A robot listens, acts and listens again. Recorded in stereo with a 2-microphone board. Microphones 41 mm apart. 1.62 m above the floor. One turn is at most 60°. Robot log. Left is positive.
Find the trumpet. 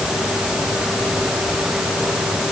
cmd idle
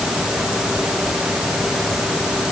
cmd idle
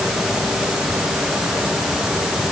end: I can't make out a trumpet to turn to.